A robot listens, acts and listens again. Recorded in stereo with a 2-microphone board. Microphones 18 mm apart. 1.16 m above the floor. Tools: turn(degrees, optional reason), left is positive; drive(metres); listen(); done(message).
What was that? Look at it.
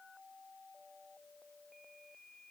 listen()
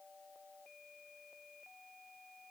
listen()
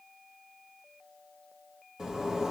turn(degrees=-35, reason="The zipper: about 35° right or 145° right.")
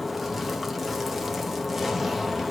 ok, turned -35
done("Facing the zipper.")